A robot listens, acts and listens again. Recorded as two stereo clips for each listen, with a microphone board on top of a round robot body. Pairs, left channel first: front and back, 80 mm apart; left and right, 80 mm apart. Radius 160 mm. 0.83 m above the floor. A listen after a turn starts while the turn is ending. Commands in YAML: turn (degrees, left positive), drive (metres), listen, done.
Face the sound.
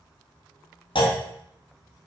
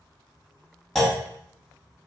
done: "Found it: a clunk, straight ahead."